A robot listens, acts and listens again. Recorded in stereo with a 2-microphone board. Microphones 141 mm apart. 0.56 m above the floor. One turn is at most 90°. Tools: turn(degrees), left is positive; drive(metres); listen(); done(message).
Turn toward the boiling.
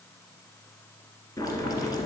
turn(degrees=25)
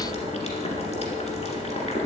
turn(degrees=90)
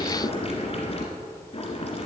turn(degrees=45)
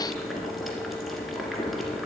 done("Facing the boiling, 1 to 2 m away.")